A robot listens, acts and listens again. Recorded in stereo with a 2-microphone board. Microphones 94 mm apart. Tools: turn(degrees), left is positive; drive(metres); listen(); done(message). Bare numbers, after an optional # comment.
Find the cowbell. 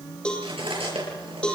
turn(30)
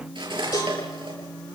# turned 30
listen()
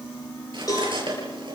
# So it is at 140° left.
turn(140)
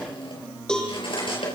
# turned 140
done("Facing the cowbell.")